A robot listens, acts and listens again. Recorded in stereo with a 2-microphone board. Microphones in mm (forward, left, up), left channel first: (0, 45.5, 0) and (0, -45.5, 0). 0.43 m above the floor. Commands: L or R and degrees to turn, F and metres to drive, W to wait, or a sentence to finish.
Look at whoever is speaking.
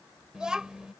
R30
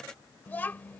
L20
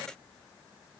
W
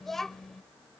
Facing the child speaking.